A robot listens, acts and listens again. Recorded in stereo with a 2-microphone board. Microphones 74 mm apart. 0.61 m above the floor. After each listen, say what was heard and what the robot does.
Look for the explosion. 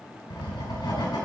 Keep listening.
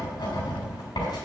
Keep listening.
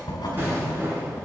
The explosion: about 30° right or 150° right. Turn 30° right.
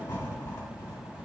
Keep listening.
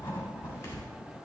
I heard an explosion, but can't make it out now. It was about straight ahead or 120° right.